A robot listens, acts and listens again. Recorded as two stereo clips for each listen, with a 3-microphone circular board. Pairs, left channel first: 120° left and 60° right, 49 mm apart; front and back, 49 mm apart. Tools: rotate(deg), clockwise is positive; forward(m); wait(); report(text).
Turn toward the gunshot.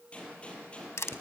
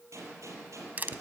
rotate(175)
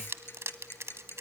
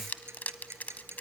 report("I heard a gunshot from this way, but can't make it out now.")